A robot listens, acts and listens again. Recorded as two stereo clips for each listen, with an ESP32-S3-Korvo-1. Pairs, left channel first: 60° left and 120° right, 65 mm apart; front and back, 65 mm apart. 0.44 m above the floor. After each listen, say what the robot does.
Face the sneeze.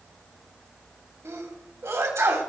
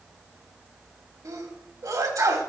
Turn 160° right.
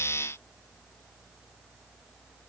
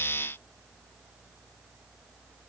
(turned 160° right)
I heard a sneeze from this way, but can't make it out now.